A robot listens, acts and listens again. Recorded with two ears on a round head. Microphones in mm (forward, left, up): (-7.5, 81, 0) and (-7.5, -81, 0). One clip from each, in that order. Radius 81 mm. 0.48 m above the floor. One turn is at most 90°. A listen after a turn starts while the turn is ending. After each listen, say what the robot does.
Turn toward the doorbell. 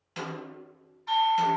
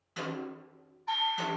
Turn 60° left.
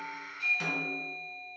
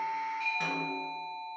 Turn 30° left.
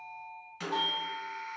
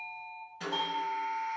Facing the doorbell.